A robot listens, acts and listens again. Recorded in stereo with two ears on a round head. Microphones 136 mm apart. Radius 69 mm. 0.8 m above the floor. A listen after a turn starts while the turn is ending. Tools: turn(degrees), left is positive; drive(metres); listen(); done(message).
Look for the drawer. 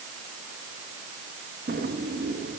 turn(degrees=-60)
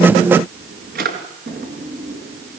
turn(degrees=-60)
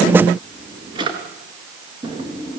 turn(degrees=-30)
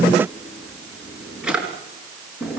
done("Facing the drawer.")